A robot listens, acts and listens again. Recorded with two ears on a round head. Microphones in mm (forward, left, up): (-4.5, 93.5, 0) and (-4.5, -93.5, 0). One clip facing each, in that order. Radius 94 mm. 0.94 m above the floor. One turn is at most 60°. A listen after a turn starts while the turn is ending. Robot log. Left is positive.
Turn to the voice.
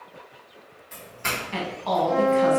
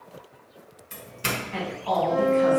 note: The woman speaking: about 55° left or 125° left.
cmd yaw +55
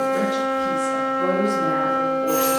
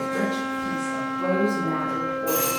cmd idle
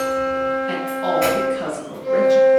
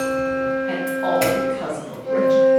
note: So it is at 15° left.
cmd yaw +15
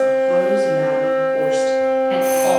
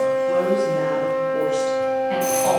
cmd idle
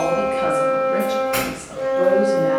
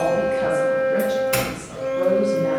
cmd idle
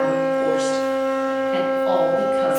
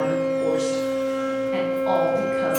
end: I heard a woman speaking from this way, but can't make it out now.